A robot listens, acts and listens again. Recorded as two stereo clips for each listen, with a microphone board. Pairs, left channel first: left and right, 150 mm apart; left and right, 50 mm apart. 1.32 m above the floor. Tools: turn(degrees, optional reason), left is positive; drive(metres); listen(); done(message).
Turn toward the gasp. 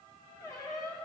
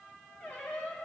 listen()
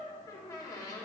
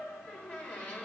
listen()
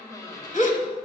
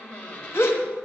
turn(degrees=55, reason="The gasp: about 55° left or 125° left.")
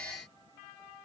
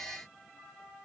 listen()
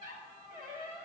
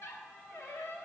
done("I heard a gasp, but can't make it out now. It was about straight ahead or 70° left.")